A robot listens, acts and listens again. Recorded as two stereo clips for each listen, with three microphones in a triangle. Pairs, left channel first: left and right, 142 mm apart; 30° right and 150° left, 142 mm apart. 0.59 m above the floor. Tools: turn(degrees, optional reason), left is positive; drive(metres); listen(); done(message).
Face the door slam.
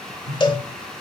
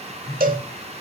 listen()
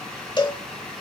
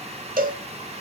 listen()
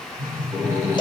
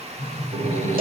turn(degrees=-165, reason="The door slam: 165° right.")
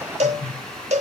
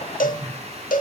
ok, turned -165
done("Facing where the door slam came from. I can't hear it now.")